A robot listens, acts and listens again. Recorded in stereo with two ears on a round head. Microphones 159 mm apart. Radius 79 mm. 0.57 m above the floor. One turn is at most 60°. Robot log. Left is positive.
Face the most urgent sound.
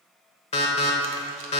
note: The alarm: about 35° left or 145° left.
cmd yaw +35
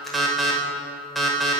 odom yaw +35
end: Facing the alarm.